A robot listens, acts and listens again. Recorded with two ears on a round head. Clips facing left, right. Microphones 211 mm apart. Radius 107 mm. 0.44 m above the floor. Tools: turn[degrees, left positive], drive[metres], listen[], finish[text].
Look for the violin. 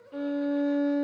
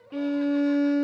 Thought: The violin: about 35° right or 145° right.
Action: turn[-35]
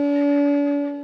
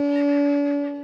Action: finish[Found it: a violin, straight ahead.]